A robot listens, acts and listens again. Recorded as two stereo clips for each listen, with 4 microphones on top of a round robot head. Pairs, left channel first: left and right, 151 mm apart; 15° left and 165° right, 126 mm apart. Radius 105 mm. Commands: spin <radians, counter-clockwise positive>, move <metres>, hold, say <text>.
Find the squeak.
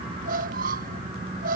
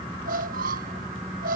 spin -2.36
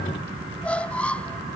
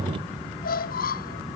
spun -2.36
spin 0.17
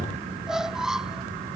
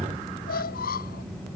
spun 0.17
say Facing the squeak.